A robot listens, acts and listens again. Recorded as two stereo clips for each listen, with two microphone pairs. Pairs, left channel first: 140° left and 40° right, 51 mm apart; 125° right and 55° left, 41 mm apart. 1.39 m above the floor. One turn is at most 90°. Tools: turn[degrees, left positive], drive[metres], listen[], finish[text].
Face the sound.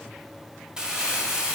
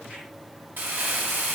Thought: The crumpling: 35° left.
Action: turn[35]
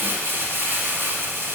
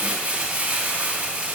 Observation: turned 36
Action: finish[Facing the crumpling, 1 to 2 m away.]